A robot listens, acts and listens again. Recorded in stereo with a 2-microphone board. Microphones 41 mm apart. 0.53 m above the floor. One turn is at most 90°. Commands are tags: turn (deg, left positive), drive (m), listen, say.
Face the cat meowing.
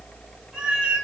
<turn deg="-20"/>
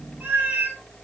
<turn deg="-90"/>
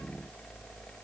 <turn deg="-45"/>
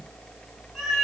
<say>Facing the cat meowing, 1 to 2 m away.</say>